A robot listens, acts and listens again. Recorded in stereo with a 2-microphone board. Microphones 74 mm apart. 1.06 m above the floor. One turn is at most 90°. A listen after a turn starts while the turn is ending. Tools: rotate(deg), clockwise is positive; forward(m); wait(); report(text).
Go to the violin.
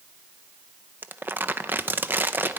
wait()
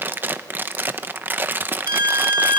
rotate(90)
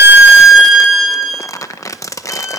forward(1.0)
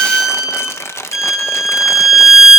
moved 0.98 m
forward(1.0)
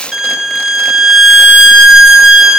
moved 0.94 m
forward(1.0)
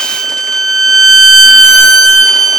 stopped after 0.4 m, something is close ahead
report("Arrived at the violin, straight ahead.")